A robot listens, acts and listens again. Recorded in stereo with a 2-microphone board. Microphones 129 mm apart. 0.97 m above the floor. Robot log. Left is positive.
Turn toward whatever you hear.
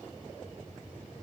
cmd idle
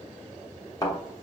note: The thud: about 30° left or 150° left.
cmd yaw +30
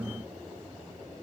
cmd idle
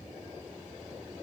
end: I heard a thud, but can't make it out now. It was about straight ahead or 120° left.